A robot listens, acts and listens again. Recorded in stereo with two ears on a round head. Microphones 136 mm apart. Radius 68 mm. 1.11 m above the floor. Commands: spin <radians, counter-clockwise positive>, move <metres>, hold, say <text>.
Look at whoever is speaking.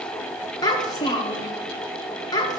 spin 0.44
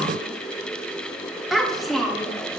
say Facing the child speaking.